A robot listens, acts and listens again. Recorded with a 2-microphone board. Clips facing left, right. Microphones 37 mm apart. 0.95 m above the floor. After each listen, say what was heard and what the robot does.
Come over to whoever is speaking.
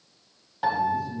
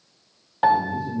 The man speaking: about 70° right or 110° right. Turn 70° right.
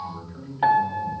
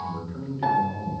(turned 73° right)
So it is at 40° right. Turn 40° right.
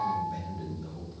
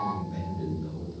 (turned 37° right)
Drive 1.0 m forward.
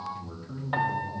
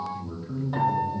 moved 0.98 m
Drive 1.0 m forward.
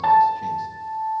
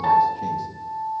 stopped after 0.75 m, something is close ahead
Keep listening.
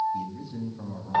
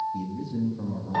I am next to the man speaking.